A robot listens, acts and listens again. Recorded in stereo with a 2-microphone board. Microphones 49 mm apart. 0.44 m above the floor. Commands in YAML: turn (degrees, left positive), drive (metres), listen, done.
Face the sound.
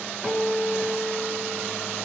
turn: -30
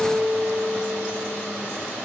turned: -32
turn: -140
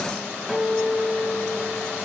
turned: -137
done: "Found it: a guitar, straight ahead, over 4 m away."